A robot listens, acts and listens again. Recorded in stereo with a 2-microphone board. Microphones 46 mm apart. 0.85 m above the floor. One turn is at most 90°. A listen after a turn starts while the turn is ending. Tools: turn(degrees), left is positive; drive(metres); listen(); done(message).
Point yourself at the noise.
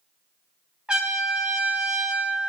turn(degrees=-25)
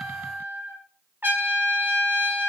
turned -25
turn(degrees=-90)
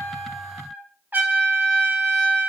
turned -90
turn(degrees=-40)
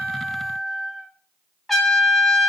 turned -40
done("Facing the trumpet.")